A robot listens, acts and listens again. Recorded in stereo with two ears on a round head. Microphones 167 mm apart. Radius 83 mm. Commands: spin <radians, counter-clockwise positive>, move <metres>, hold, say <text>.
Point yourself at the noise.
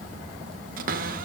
spin -0.87
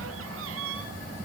spin -1.48
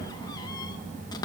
spin 0.35
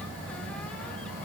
hold
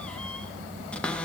say Found it: a cupboard door, straight ahead.